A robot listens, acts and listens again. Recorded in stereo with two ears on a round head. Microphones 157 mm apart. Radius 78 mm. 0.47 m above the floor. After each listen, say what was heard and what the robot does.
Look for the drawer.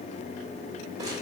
Keep listening.
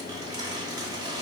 Keep listening.
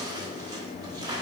I can't make out a drawer, only crumpling.